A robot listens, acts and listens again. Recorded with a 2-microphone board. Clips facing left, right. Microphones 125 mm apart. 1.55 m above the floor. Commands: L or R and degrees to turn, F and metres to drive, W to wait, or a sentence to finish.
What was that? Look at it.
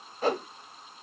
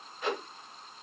L40
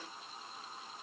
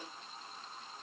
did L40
W
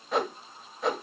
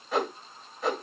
Found it: a whoosh, straight ahead.